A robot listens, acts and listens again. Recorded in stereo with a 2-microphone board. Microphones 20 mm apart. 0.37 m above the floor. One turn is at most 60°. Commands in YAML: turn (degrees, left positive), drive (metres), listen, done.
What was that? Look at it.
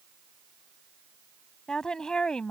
turn: 40
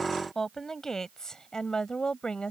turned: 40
turn: 45
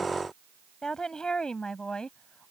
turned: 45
turn: 40
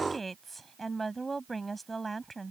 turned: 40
done: "Facing the woman speaking."